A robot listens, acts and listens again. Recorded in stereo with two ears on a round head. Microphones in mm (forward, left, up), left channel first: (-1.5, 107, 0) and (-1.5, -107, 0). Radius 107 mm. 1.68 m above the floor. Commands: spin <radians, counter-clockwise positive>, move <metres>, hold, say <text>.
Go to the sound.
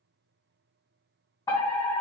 spin 0.35
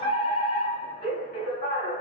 spin 2.44
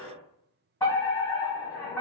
spin 0.17
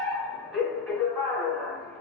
move 1.0
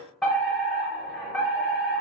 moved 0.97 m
move 1.0
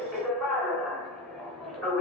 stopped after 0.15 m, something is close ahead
say I am next to the fire alarm.